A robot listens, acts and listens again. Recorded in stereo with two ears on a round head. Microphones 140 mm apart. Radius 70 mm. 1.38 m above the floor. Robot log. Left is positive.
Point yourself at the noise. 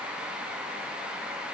cmd idle
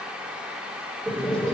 cmd yaw +30
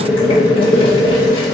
note: So it is at 145° left.
cmd yaw +145
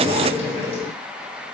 note: The boiling is now 40° left.
cmd yaw +40
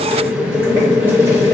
note: The boiling is now 15° right.
cmd yaw -15
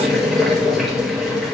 end: Found it: boiling, straight ahead.